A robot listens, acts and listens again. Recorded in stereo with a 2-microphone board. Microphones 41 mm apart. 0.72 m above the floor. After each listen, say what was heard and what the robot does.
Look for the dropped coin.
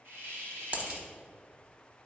The dropped coin: about 35° right or 145° right. Turn 35° right.
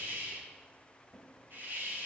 Keep listening.
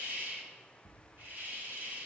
I heard a dropped coin, but can't make it out now. It was about straight ahead or 110° right.